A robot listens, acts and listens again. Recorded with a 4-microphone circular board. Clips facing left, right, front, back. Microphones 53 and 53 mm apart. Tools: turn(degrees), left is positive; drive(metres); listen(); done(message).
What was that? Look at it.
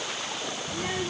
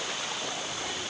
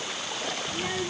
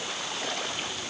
turn(degrees=35)
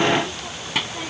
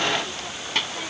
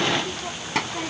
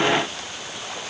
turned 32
done("Facing the child speaking.")